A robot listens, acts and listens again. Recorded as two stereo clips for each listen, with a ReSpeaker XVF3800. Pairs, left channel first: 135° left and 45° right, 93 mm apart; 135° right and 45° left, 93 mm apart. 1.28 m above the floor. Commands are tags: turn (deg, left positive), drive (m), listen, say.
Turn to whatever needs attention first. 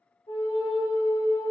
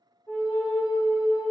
<listen/>
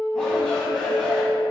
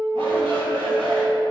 <turn deg="50"/>
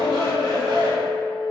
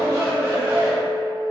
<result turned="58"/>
<say>Facing the shout, 1 to 2 m away.</say>